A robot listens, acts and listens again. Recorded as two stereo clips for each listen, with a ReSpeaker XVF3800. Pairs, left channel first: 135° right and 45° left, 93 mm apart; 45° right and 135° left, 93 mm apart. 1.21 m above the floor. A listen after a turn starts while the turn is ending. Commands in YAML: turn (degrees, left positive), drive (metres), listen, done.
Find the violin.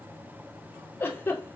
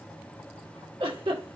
listen: true
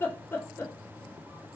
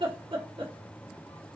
listen: true
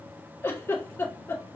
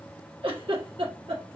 done: "I can't make out a violin to turn to."